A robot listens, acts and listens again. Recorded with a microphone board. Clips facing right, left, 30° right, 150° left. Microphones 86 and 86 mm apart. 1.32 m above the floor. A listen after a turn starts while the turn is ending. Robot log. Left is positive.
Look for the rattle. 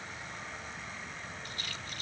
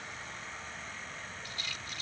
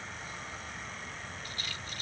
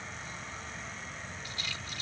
note: The rattle: 60° right.
cmd yaw -60
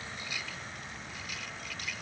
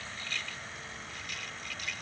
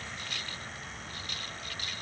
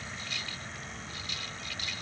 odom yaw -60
end: Found it: a rattle, straight ahead.